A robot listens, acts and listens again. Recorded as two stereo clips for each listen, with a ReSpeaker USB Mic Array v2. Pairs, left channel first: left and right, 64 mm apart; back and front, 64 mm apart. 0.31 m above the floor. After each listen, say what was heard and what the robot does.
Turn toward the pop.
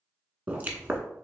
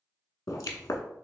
The pop: 155° right. Turn 155° right.
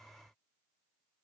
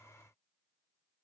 Facing where the pop came from. I can't hear it now.